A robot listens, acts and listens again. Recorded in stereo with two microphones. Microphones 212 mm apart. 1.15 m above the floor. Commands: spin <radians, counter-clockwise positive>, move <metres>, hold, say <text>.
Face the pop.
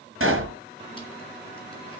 spin -1.57
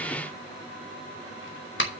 say I heard a pop from this way, but can't make it out now.